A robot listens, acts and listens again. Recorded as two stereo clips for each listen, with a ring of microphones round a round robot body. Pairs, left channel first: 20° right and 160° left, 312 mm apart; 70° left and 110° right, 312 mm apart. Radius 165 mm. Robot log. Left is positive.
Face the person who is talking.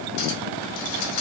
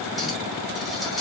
cmd idle
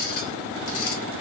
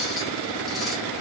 cmd idle
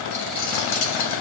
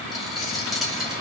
end: I can't make out anyone speaking to turn to.